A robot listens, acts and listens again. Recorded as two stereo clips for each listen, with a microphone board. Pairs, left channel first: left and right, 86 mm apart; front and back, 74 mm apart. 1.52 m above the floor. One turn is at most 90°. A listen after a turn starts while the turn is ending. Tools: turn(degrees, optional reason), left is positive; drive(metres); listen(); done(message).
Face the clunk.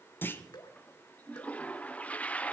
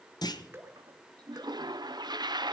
turn(degrees=25, reason="The clunk: 25° left.")
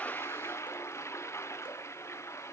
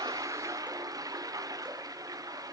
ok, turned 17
turn(degrees=10, reason="Nothing new. It was at 10° left.")
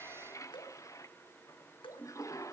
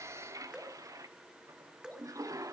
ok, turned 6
done("Facing where the clunk came from. I can't hear it now.")